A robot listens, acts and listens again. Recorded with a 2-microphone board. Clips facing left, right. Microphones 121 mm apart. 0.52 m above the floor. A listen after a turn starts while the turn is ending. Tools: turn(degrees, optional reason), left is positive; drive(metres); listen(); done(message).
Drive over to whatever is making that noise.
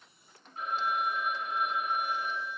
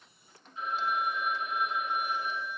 turn(degrees=50, reason="The phone ringing: about 50° left or 130° left.")
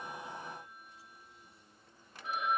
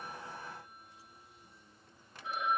turn(degrees=80, reason="So it is at 80° left.")
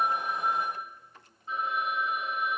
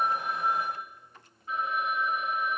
turn(degrees=25, reason="The phone ringing is now 25° left.")
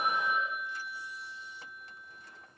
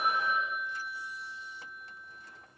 turn(degrees=15, reason="The phone ringing is now 15° left.")
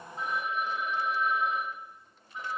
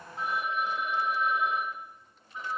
drive(metres=1.0)
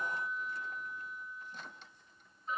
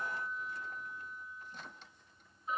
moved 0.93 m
drive(metres=1.0)
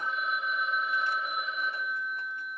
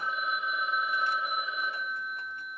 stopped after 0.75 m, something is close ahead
turn(degrees=-10, reason="The phone ringing is now 10° right.")
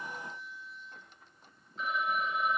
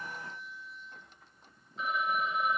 done("I am next to the phone ringing.")